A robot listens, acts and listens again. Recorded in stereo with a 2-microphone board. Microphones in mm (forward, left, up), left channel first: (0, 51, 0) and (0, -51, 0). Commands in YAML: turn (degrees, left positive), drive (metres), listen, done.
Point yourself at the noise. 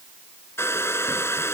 turn: 25
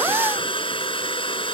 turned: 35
turn: 120
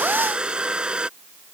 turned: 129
turn: -10
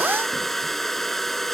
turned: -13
done: "Facing the hair dryer."